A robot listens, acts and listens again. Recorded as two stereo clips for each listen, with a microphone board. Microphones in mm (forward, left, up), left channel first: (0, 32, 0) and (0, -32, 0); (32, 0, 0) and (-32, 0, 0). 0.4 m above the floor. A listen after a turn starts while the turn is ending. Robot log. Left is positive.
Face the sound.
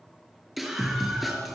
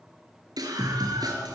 note: The scream: straight behind.
cmd yaw +180
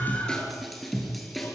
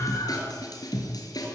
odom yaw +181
end: Facing the scream, over 4 m away.